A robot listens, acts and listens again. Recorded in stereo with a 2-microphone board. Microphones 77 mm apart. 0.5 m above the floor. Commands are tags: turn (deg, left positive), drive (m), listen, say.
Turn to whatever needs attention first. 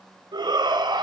<turn deg="-70"/>
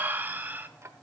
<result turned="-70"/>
<turn deg="-25"/>
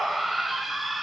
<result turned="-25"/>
<say>Found it: a shout, straight ahead.</say>